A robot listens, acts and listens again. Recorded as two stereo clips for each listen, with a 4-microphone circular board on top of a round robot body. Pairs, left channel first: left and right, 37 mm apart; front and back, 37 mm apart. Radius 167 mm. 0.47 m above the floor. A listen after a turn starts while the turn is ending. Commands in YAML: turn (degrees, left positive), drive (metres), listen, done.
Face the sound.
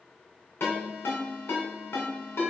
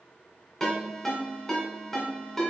turn: 80
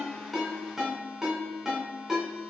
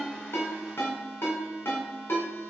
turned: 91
turn: -10
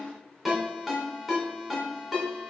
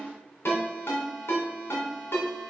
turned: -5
done: "Facing the ringtone, 2 to 4 m away."